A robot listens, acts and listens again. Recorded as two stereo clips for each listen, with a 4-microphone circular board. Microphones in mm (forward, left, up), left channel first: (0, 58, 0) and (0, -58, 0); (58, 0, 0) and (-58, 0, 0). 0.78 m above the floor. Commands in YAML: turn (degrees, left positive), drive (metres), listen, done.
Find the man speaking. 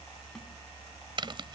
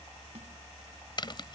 listen: true
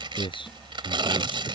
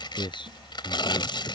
turn: 50
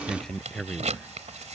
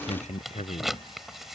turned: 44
done: "Found it: a man speaking, straight ahead."